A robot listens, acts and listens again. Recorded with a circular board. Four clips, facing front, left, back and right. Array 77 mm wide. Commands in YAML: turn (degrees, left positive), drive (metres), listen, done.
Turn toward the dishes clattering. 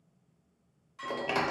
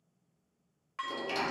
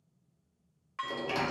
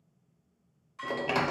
turn: 140
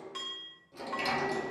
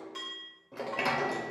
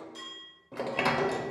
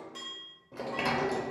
turn: 10
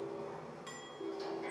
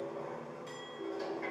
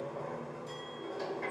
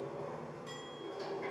listen: true
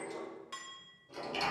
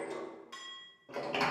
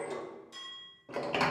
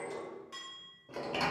done: "Facing the dishes clattering, 1 to 2 m away."